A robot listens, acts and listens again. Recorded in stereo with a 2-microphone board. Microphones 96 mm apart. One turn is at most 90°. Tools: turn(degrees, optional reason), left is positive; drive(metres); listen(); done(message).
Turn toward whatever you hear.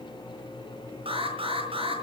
turn(degrees=-75, reason="The alarm: about 75° right or 105° right.")
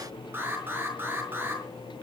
turn(degrees=-20, reason="So it is at 20° right.")
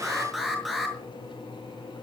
done("Found it: an alarm, straight ahead.")